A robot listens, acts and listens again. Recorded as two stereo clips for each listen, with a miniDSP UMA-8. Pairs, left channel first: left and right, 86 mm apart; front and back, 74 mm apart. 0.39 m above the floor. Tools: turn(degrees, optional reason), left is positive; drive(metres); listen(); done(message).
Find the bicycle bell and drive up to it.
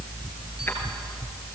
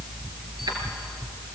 listen()
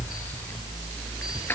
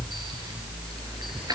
listen()
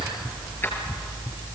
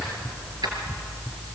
done("I can't make out a bicycle bell.")